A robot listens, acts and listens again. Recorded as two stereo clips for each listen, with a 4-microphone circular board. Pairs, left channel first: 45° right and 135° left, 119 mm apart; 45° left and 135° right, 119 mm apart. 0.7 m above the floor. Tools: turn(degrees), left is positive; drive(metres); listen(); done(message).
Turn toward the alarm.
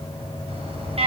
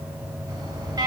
turn(degrees=170)
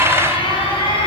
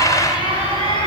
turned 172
done("Facing the alarm, over 4 m away.")